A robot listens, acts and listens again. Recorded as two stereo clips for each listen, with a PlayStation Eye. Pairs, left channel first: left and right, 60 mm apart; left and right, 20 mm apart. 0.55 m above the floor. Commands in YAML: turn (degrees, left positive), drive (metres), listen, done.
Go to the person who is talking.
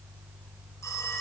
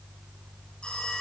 listen: true
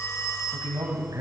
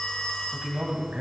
turn: -65
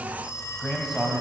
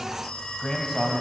drive: 1.0
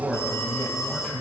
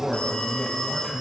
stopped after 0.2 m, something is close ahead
done: "Something is in my way. I am facing the man speaking but have not reached it."